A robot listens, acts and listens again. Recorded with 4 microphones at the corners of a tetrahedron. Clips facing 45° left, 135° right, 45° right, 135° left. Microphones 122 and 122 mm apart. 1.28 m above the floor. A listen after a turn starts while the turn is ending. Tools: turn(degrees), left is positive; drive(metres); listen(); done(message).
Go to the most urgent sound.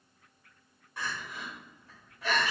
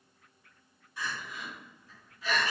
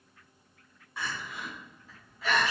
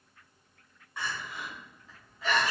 turn(degrees=45)
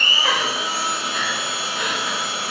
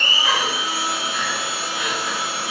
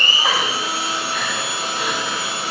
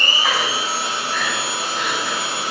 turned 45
listen()
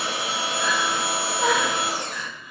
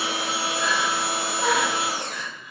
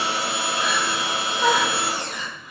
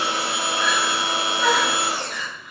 drive(metres=1.0)
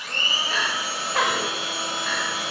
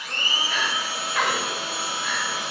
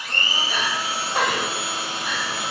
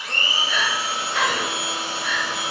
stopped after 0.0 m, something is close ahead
done("Something is in my way. I am facing the crying but have not reached it.")